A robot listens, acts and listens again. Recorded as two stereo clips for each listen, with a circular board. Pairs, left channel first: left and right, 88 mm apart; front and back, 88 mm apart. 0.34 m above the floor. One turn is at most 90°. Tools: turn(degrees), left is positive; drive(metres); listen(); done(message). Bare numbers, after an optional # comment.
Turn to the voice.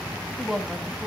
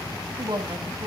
# The woman speaking: 175° left.
turn(90)
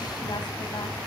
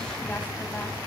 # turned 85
# Nothing new. It was at 90° left.
turn(90)
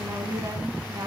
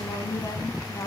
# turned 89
# The woman speaking is now 50° right.
turn(-50)
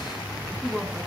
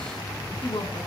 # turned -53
done("Found it: a woman speaking, straight ahead.")